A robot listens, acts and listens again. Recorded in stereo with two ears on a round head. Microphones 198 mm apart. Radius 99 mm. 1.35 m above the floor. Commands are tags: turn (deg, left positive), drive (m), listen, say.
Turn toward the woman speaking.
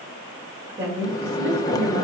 <turn deg="-55"/>
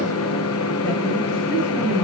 <turn deg="-10"/>
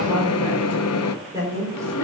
<turn deg="-15"/>
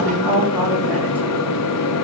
<turn deg="-10"/>
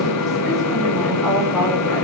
<listen/>
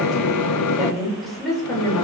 <say>Found it: a woman speaking, straight ahead.</say>